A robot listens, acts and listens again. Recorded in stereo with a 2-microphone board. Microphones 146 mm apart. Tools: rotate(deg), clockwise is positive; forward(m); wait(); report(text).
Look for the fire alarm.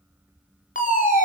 rotate(-65)
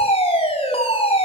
rotate(-45)
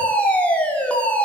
rotate(-10)
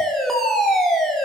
report("Found it: a fire alarm, straight ahead, over 4 m away.")